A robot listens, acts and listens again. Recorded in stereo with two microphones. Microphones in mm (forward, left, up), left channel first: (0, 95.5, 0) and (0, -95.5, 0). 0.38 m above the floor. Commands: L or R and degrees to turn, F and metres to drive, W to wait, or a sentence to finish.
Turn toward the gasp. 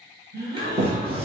R60
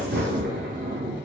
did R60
W
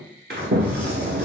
I heard a gasp, but can't make it out now. It was about straight ahead or 60° right.